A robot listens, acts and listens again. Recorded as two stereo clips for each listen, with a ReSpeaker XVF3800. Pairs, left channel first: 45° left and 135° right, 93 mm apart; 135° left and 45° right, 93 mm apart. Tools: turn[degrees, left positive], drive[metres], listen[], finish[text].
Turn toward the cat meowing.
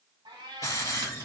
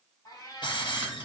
Thought: The cat meowing: 170° right.
Action: turn[-170]
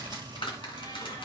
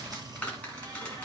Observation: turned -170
Action: listen[]
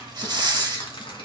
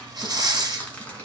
Action: listen[]
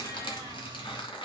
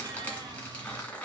Action: finish[I heard a cat meowing from this way, but can't make it out now.]